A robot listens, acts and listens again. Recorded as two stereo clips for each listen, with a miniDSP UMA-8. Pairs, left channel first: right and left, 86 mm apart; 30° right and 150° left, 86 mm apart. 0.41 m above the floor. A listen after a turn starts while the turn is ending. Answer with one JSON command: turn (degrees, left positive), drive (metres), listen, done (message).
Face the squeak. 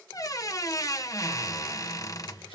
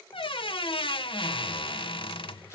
{"turn": -40}
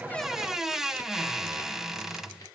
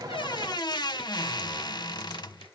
{"done": "Facing the squeak."}